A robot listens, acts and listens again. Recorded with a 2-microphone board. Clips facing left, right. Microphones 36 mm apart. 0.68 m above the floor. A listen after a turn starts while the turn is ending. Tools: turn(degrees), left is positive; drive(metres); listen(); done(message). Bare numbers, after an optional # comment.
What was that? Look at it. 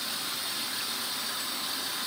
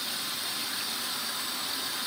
listen()
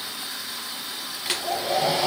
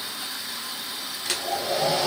turn(30)
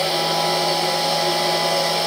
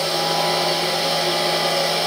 # So it is at 15° right.
turn(-15)
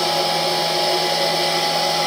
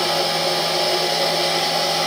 done("Found it: a hair dryer, straight ahead, over 4 m away.")